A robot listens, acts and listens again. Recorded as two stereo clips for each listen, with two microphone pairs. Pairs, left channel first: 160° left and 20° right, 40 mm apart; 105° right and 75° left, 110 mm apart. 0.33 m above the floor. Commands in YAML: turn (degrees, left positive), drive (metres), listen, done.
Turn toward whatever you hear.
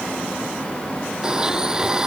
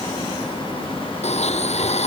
turn: -100
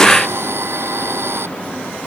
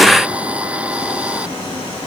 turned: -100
done: "Found it: a blender, straight ahead."